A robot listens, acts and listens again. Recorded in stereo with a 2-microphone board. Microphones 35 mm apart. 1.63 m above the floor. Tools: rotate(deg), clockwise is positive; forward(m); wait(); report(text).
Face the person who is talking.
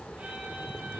wait()
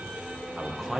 rotate(-30)
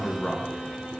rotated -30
rotate(-150)
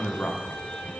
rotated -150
rotate(-55)
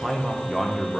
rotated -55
rotate(10)
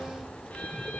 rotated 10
wait()
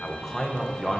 report("Facing the man speaking.")